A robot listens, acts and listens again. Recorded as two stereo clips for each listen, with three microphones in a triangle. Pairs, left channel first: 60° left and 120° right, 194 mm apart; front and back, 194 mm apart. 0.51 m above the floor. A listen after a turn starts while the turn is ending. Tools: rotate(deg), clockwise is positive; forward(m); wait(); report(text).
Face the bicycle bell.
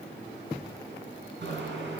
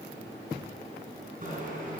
rotate(135)
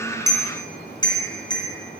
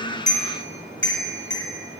rotate(10)
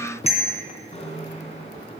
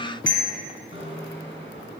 report("Facing the bicycle bell.")